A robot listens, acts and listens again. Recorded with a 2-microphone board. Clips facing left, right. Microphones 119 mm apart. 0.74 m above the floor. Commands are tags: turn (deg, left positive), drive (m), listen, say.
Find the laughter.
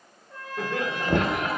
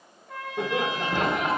<turn deg="-20"/>
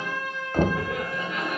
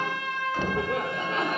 <turn deg="-30"/>
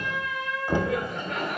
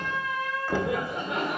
<turn deg="-20"/>
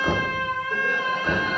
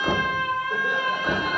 <listen/>
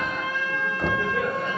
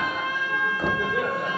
<turn deg="-30"/>
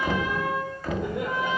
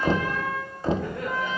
<listen/>
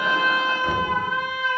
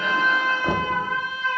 <listen/>
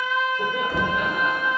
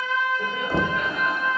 <say>I heard laughter, but can't make it out now. It was about 25° left or 145° right.</say>